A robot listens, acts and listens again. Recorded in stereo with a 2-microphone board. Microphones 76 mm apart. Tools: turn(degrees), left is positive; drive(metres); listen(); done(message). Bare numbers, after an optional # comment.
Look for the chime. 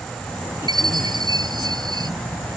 # The chime: about 65° right or 115° right.
turn(-65)
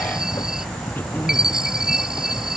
# So it is at 10° right.
turn(-10)
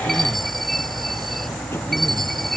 done("Found it: a chime, straight ahead.")